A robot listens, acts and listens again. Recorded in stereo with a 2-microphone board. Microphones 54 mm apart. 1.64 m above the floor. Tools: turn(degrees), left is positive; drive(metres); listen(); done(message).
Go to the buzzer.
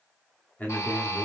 turn(degrees=65)
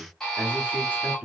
turn(degrees=10)
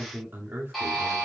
drive(metres=1.0)
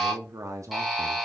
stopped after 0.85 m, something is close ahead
done("Arrived at the buzzer, straight ahead.")